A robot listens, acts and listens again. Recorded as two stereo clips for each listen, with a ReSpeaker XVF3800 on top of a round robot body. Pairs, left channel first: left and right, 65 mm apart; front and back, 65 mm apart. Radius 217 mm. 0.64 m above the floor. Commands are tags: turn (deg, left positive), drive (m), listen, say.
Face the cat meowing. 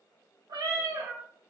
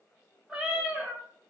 <turn deg="-105"/>
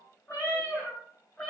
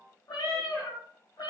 <turn deg="25"/>
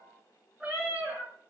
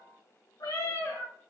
<turn deg="-15"/>
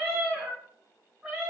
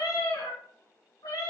<say>Found it: a cat meowing, straight ahead.</say>